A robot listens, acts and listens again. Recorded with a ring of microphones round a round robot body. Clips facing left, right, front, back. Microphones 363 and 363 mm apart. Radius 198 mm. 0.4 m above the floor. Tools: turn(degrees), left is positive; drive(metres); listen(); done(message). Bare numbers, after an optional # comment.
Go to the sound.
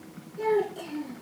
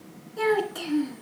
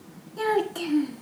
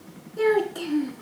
# The child speaking: 70° right.
turn(-70)
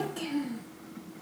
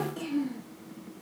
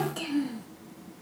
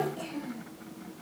# The child speaking is now 10° left.
turn(10)
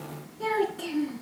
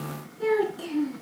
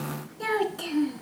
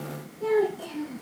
drive(1.0)
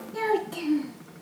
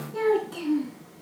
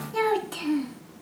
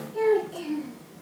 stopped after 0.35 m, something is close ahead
done("Something is in my way. I am facing the child speaking but have not reached it.")